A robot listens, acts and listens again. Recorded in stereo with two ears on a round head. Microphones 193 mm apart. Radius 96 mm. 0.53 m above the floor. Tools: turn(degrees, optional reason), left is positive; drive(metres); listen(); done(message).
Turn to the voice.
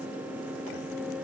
listen()
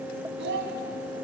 turn(degrees=-55, reason="The child speaking: about 55° right or 125° right.")
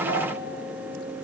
listen()
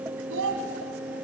turn(degrees=-65, reason="So it is at 65° right.")
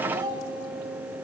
turn(degrees=-20, reason="The child speaking is now 20° right.")
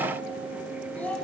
done("Facing the child speaking, 2 to 4 m away.")